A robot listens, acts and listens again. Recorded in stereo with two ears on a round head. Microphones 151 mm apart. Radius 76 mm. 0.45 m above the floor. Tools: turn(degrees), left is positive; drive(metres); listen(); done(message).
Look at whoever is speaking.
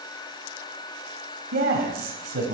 turn(degrees=-65)
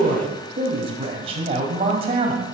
turn(degrees=-40)
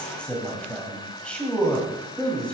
turn(degrees=10)
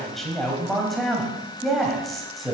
done("Facing the man speaking, 2 to 4 m away.")